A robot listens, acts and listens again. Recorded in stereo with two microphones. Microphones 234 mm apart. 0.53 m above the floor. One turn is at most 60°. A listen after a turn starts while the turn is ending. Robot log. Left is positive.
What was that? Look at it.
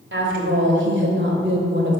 note: The woman speaking: about 50° right or 130° right.
cmd yaw -50
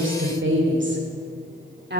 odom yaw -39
note: The woman speaking: about 45° right or 135° right.
cmd yaw -45
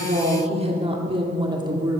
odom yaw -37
note: So it is at 15° right.
cmd yaw -15
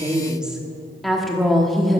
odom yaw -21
end: Found it: a woman speaking, straight ahead.